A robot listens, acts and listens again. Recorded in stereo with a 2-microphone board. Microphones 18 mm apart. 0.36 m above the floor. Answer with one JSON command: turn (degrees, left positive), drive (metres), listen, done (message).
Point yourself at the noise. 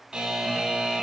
{"turn": -60}
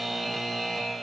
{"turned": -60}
{"turn": -10}
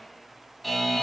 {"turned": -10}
{"done": "Facing the buzzer, 2 to 4 m away."}